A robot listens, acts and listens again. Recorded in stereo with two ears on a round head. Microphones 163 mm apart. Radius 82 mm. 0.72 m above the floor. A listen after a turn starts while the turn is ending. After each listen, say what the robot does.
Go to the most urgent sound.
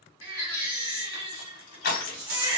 Turn 25° right.
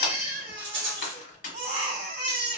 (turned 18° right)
Turn 135° right.
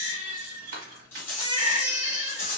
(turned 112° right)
Turn 25° right.
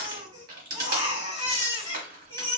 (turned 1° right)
Turn 25° right.
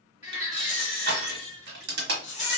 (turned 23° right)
Drive 1.0 m forward.
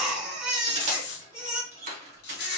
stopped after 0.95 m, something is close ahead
I am next to the baby crying.